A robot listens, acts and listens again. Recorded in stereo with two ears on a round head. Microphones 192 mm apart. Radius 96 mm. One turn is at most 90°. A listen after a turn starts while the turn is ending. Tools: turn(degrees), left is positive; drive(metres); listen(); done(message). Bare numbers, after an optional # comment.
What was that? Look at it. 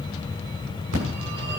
turn(-90)
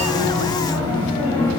# So it is at 10° left.
turn(10)
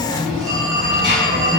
done("Facing the phone ringing, over 4 m away.")